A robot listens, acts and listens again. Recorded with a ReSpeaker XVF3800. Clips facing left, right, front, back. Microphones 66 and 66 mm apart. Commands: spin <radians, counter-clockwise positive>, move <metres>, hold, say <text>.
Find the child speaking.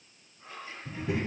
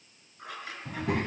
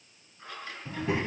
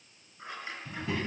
spin -1.22
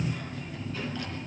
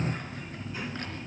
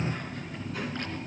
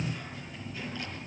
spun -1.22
spin -0.26
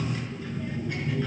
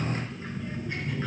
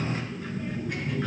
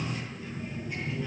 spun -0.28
say Found it: a child speaking, straight ahead.